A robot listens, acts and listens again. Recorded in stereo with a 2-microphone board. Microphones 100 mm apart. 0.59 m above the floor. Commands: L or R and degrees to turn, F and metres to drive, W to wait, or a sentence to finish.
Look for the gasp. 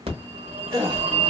R40
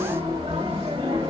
W
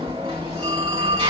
I heard a gasp, but can't make it out now. It was about straight ahead or 100° right.